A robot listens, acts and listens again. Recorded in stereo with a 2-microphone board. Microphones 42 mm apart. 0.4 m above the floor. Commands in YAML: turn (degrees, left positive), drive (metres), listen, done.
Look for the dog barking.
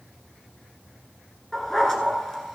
turn: 30
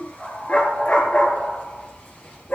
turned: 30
turn: 140
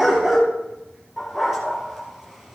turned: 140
turn: -10
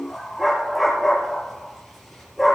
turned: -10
done: "Facing the dog barking, over 4 m away."